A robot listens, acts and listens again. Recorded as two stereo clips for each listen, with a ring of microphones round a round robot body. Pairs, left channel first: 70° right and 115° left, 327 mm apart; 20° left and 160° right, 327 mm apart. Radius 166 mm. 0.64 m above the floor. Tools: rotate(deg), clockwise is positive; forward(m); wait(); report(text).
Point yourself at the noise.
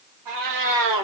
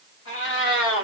rotate(-80)
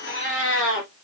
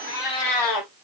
rotate(10)
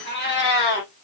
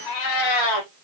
rotate(10)
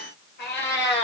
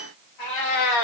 report("Facing the cat meowing.")